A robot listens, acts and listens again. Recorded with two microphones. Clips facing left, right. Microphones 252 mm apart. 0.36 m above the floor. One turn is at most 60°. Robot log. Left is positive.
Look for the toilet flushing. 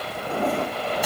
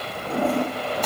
note: The toilet flushing: about 50° right or 130° right.
cmd yaw -50
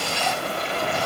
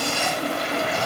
note: So it is at 80° right.
cmd yaw -60
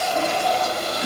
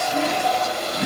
note: The toilet flushing is now 20° right.
cmd yaw -20
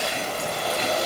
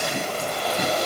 cmd idle
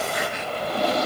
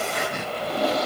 end: Facing the toilet flushing, over 4 m away.